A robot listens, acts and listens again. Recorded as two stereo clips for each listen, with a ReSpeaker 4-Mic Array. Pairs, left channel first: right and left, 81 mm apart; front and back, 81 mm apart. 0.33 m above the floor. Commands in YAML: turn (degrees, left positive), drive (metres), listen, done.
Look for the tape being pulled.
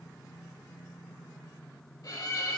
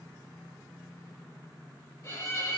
listen: true
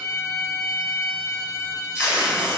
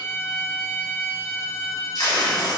turn: 15
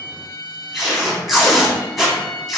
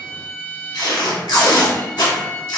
done: "Found it: tape being pulled, straight ahead."